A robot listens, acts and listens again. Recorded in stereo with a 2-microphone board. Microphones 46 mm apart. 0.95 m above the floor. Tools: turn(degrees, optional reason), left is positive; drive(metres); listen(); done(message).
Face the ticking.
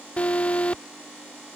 listen()
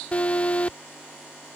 listen()
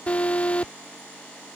done("I can't make out ticking, only an alarm.")